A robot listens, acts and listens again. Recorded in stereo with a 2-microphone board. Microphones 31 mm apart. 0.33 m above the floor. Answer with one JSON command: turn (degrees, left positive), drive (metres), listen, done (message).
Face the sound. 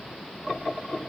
{"listen": true}
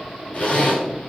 {"turn": 50}
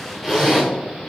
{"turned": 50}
{"done": "Found it: a zipper, straight ahead, 1 to 2 m away."}